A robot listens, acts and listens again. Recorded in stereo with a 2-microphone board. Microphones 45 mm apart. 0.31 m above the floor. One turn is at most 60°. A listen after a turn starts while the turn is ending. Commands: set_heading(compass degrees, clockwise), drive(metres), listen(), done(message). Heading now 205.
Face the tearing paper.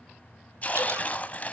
set_heading(170)
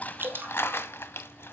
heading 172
set_heading(112)
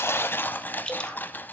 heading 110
set_heading(60)
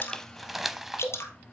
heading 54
done("Found it: tearing paper, straight ahead, under 1 m away.")